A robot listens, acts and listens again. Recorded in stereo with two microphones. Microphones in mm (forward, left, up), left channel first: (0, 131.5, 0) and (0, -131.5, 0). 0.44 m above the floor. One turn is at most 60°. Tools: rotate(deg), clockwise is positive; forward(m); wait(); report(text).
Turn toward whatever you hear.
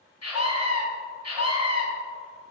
rotate(-60)
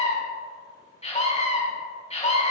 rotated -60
rotate(-25)
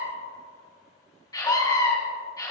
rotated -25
rotate(-15)
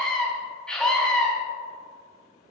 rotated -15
report("Found it: a scream, straight ahead.")